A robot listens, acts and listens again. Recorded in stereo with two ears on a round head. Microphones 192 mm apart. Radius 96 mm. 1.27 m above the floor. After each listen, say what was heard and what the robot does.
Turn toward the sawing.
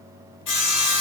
Turn 90° left.
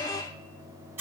So it is at 10° right. Turn 10° right.
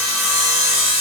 Facing the sawing, 1 to 2 m away.